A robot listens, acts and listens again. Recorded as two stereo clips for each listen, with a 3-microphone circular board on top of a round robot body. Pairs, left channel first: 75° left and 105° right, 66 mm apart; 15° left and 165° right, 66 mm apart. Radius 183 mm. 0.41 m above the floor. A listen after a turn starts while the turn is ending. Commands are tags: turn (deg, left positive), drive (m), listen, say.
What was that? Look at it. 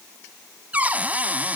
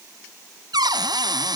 <turn deg="-175"/>
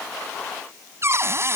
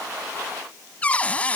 <turn deg="-55"/>
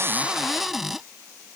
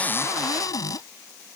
<turn deg="-20"/>
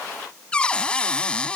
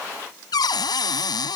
<say>Facing the cupboard door.</say>